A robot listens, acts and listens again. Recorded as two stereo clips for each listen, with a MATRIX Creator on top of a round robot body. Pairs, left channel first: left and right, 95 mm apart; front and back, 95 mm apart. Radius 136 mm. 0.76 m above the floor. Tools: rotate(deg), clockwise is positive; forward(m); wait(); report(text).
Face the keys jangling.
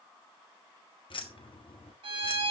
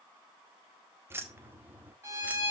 rotate(-110)
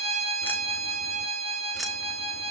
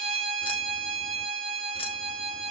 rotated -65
rotate(-45)
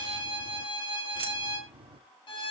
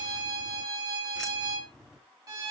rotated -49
rotate(90)
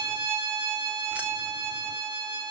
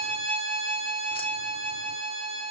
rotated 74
rotate(15)
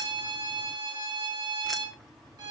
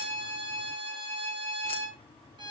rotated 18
report("Found it: keys jangling, straight ahead, 1 to 2 m away.")